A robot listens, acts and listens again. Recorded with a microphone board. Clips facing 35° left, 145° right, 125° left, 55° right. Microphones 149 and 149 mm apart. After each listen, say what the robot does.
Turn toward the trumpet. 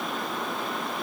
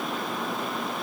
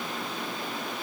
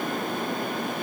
Keep listening.
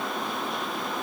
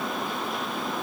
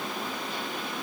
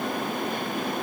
Keep listening.
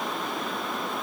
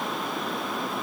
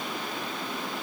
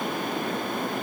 I can't make out a trumpet.